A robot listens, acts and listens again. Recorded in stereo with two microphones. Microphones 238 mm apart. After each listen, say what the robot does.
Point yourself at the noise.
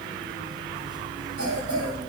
Turn 75° right.
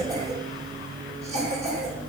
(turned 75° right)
Turn 30° right.
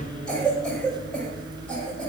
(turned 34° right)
Facing the cough.